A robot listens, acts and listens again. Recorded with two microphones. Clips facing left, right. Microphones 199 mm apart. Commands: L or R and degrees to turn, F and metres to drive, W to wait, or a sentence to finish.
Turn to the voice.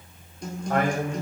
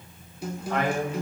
L55
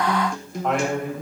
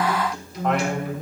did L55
Found it: a man speaking, straight ahead.